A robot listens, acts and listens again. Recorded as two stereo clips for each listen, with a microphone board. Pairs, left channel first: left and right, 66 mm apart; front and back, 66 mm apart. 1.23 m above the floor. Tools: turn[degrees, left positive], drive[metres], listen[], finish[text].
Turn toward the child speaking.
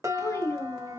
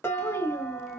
Thought: The child speaking: 40° left.
Action: turn[40]
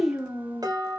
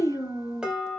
Thought: The child speaking is now 25° right.
Action: turn[-25]
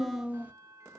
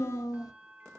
Thought: The child speaking is now 25° right.
Action: turn[-25]
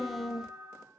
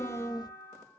Thought: The child speaking is now 10° right.
Action: turn[-10]
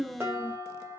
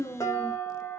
Thought: The child speaking is now 15° right.
Action: turn[-15]
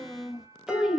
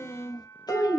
Action: finish[Facing the child speaking.]